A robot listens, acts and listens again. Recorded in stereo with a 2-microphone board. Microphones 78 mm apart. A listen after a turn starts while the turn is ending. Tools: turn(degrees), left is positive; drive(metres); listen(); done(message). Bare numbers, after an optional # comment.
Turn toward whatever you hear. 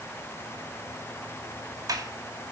# The sliding door: about 50° right or 130° right.
turn(-50)
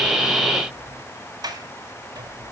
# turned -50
# So it is at 70° right.
turn(-70)
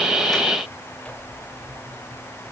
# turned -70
# The sliding door is now 15° left.
turn(15)
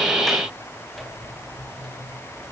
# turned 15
done("Facing the sliding door.")